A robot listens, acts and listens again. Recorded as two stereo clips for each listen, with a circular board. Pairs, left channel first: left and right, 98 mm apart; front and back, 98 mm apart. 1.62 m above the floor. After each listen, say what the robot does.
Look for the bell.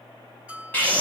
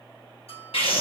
Turn 10° right.
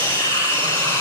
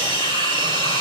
Keep listening.
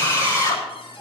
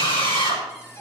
Keep listening.
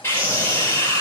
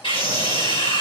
I heard a bell from this way, but can't make it out now.